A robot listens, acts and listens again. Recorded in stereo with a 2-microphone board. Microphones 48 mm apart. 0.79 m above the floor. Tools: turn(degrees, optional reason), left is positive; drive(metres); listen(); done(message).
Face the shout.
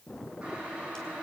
listen()
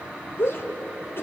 turn(degrees=55, reason="The shout: about 55° left or 125° left.")
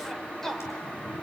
done("Facing the shout.")